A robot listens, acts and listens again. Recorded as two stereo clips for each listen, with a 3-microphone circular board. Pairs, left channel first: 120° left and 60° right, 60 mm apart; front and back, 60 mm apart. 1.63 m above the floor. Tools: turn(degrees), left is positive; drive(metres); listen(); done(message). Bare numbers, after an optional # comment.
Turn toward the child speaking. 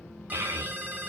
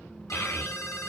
# The child speaking: 35° right.
turn(-35)
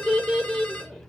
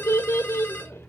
# The child speaking is now 30° left.
turn(30)
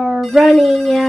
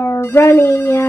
# The child speaking is now 40° left.
turn(40)
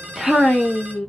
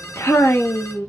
# The child speaking is now 40° left.
turn(40)
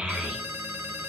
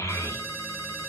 # The child speaking is now 10° left.
turn(10)
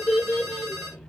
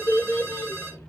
# The child speaking is now 20° left.
turn(20)
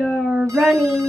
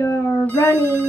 done("Found it: a child speaking, straight ahead, 1 to 2 m away.")